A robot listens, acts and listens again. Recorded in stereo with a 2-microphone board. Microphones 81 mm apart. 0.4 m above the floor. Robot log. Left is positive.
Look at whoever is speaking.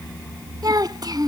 note: The child speaking: about 55° right or 125° right.
cmd yaw -55
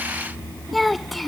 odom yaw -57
end: Facing the child speaking.